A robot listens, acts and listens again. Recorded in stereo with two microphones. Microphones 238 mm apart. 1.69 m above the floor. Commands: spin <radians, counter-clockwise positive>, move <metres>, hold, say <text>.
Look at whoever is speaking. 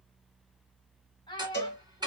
spin 0.35
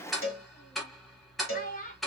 spin 2.53
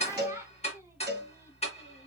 hold
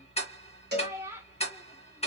spin -0.17
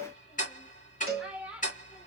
say Found it: a child speaking, straight ahead, 2 to 4 m away.